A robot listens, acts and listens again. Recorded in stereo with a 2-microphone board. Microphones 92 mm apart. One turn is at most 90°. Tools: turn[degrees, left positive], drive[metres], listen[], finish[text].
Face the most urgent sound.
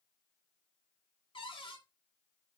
Action: listen[]
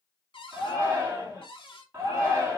Thought: The shout: about 25° right or 155° right.
Action: turn[-25]
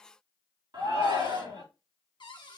Thought: So it is at 125° right.
Action: turn[-90]
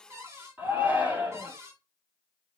Thought: The shout is now 25° right.
Action: turn[-25]
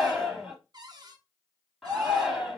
Action: finish[Found it: a shout, straight ahead, 2 to 4 m away.]